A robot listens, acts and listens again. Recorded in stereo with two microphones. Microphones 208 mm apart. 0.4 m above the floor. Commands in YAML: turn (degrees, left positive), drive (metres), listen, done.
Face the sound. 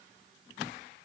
listen: true
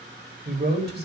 turn: -55
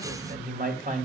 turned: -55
turn: -45
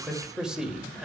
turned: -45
done: "Found it: a man speaking, straight ahead, 1 to 2 m away."